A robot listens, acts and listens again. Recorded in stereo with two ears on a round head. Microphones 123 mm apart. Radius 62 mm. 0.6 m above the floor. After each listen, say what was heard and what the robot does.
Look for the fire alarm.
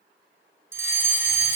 The fire alarm: about 20° right or 160° right. Turn 20° right.
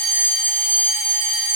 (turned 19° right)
So it is at 145° right. Turn 145° right.
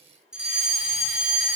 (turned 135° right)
Facing the fire alarm, over 4 m away.